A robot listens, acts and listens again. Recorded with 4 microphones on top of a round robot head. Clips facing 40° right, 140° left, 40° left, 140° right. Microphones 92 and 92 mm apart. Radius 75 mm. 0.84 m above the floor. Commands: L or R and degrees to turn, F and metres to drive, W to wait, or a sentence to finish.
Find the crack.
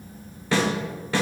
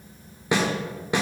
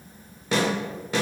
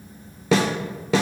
W
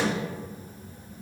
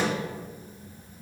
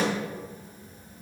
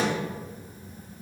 W
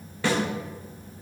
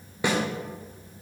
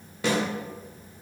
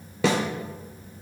I can't make out a crack to turn to.